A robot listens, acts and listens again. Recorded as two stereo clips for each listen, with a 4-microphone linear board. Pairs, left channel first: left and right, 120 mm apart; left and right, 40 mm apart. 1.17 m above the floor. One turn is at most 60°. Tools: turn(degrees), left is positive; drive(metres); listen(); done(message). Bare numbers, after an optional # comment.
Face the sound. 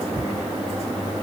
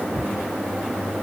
listen()
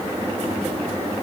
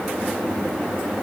listen()
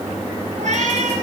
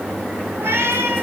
turn(-60)
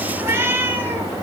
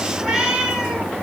# So it is at 20° right.
turn(-20)
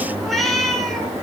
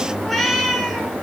done("Found it: a cat meowing, straight ahead.")